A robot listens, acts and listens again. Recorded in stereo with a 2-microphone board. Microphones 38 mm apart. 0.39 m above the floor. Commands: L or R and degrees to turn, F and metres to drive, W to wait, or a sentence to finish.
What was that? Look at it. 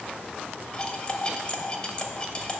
L25
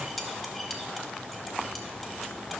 Found it: cutlery clinking, straight ahead, under 1 m away.